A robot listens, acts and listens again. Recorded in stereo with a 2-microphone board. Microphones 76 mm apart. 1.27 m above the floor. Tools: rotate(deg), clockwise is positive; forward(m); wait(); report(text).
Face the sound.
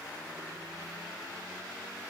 wait()
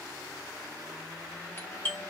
rotate(-25)
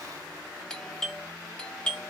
rotate(-15)
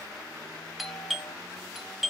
report("Found it: a doorbell, straight ahead.")